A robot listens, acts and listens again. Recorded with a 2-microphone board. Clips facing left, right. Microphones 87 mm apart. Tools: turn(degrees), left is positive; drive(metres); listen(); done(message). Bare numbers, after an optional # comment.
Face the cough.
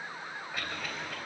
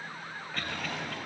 turn(30)
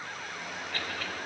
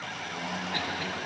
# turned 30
listen()
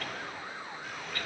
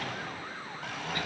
listen()
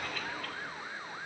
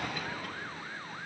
done("I heard a cough, but can't make it out now. It was about 20° right or 140° left.")